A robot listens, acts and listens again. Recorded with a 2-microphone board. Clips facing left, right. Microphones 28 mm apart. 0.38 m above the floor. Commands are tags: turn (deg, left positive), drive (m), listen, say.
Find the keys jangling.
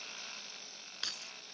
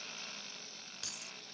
<turn deg="40"/>
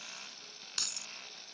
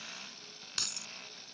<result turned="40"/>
<say>Facing the keys jangling.</say>